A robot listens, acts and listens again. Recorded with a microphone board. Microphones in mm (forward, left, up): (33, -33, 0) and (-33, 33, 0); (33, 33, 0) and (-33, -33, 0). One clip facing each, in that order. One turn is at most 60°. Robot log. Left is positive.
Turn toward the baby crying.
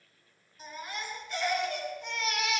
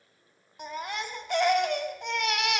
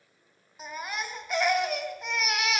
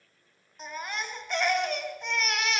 note: The baby crying: 130° left.
cmd yaw +60
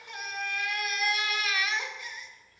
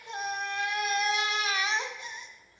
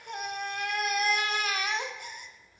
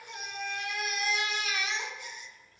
note: The baby crying is now 75° left.
cmd yaw +60
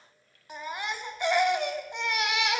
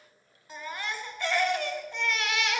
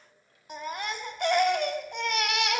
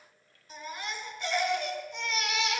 note: The baby crying is now 25° left.
cmd yaw +25
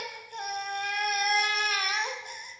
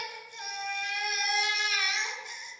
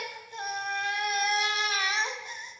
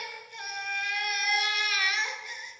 note: The baby crying is now 10° right.
cmd yaw -10
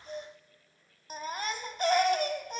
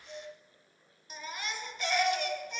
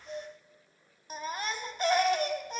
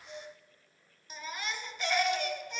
end: Found it: a baby crying, straight ahead.